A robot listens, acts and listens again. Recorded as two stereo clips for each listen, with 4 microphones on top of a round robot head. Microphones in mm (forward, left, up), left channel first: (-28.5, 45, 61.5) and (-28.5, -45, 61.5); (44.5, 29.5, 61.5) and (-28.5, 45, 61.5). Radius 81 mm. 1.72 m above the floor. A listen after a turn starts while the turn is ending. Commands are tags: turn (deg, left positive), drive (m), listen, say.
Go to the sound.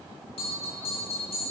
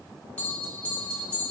<turn deg="60"/>
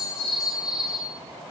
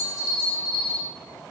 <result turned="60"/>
<turn deg="-10"/>
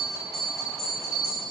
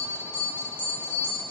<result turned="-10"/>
<drive m="1.0"/>
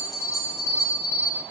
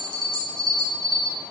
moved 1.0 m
<drive m="1.0"/>
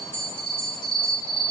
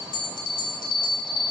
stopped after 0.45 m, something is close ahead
<turn deg="10"/>
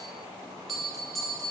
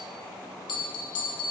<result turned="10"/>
<say>Arrived at the bell, straight ahead.</say>